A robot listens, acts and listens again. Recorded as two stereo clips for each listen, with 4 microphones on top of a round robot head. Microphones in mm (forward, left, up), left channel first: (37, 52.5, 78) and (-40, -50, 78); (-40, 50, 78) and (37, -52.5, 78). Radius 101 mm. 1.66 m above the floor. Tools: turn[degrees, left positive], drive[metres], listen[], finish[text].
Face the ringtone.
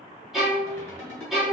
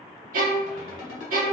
Thought: The ringtone: 125° left.
Action: turn[125]
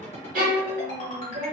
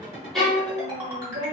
Thought: The ringtone is now 15° left.
Action: turn[15]
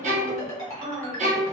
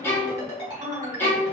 Action: finish[Facing the ringtone, 1 to 2 m away.]